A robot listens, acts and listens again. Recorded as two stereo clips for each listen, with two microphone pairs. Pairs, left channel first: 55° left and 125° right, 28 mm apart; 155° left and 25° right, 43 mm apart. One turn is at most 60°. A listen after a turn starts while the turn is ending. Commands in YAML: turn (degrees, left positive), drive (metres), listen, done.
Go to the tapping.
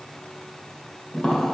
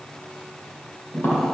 turn: 60
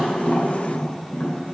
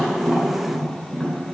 turn: 60
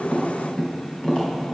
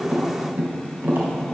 drive: 1.0
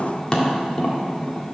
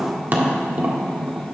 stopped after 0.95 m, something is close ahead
done: "Arrived at the tapping, straight ahead."